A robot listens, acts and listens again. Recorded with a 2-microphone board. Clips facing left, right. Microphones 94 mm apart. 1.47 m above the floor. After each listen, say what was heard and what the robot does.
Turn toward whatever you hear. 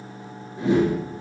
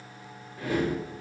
The whoosh: about 25° left or 155° left. Turn 25° left.
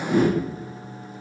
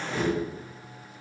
So it is at 130° left. Turn 130° left.
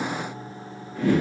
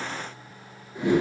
The whoosh is now 20° right. Turn 20° right.
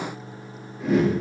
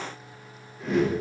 Found it: a whoosh, straight ahead, 1 to 2 m away.